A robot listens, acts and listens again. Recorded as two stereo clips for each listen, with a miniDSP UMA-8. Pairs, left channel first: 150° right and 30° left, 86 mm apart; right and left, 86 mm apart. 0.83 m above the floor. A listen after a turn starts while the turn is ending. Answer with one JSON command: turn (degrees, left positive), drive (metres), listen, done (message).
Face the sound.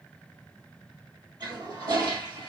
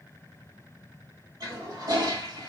{"turn": 50}
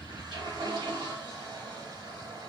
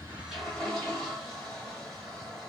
{"done": "Found it: a toilet flushing, straight ahead, 1 to 2 m away."}